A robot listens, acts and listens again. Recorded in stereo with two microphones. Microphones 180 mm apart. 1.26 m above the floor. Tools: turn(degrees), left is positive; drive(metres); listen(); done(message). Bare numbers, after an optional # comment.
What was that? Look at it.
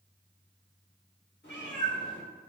# The cat meowing: about 70° left or 110° left.
turn(70)
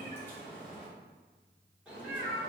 # So it is at 10° right.
turn(-10)
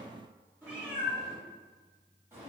# The cat meowing is now 15° right.
turn(-15)
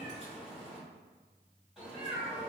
done("Facing the cat meowing.")